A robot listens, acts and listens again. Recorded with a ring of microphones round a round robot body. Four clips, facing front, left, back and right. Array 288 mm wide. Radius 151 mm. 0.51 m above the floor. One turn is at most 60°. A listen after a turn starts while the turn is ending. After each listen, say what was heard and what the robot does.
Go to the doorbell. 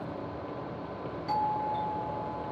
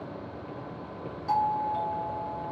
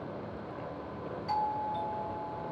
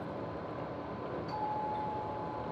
The doorbell: 70° left. Turn 60° left.
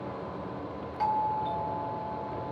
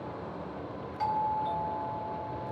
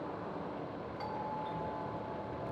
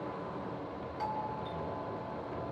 Drive 1.0 m forward.
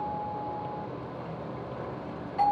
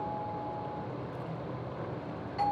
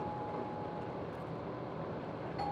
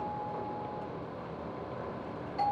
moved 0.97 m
The doorbell is now 10° left. Turn 10° left.
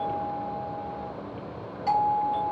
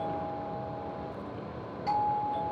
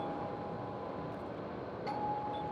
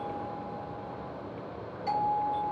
Drive 1.0 m forward.
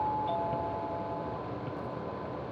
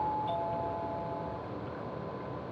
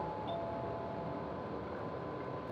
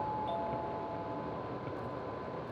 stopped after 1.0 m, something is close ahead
Keep listening.
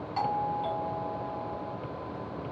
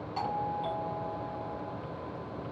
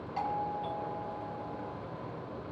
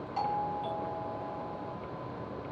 The doorbell is now 10° left. Turn 10° left.
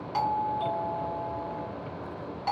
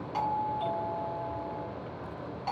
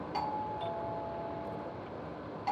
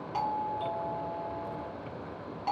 Arrived at the doorbell, straight ahead.